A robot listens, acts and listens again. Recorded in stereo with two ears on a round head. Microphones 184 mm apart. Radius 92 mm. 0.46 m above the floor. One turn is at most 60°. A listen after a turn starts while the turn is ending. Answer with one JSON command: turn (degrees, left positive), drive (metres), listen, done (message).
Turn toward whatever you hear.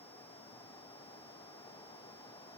{"listen": true}
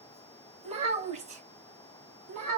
{"turn": -40}
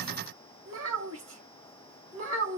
{"turn": -60}
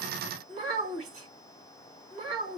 {"turn": -35}
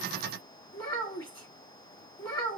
{"turn": 10}
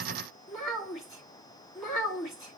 {"done": "Facing the child speaking, 2 to 4 m away."}